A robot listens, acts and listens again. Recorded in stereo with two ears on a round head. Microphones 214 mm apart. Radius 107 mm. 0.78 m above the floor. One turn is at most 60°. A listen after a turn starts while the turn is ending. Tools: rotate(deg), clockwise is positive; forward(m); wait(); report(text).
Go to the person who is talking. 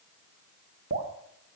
wait()
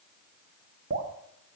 wait()
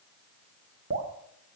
report("I can't make out anyone speaking, only dripping.")